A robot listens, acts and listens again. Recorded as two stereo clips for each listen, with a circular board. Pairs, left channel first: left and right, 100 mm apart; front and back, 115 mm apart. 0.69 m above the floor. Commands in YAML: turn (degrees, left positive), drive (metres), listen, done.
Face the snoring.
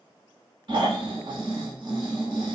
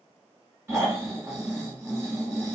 turn: -115
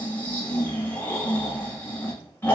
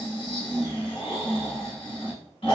turn: 25
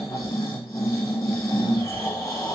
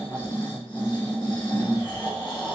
turn: 40
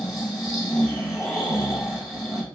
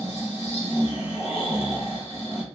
done: "Found it: snoring, straight ahead, 1 to 2 m away."